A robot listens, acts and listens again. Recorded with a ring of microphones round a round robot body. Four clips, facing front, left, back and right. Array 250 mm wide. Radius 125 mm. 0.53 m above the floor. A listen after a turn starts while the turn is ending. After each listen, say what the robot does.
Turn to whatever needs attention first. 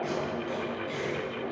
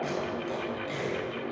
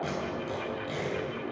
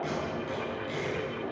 Keep listening.
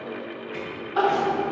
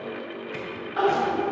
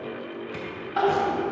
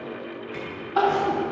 Turn 110° right.
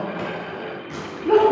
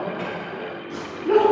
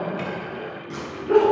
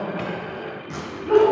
Turn 30° left.
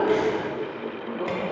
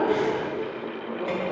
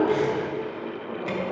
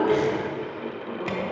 Keep listening.
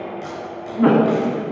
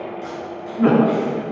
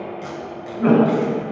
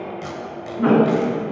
Turn 10° left.
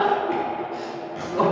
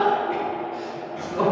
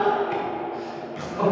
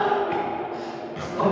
Found it: crying, straight ahead.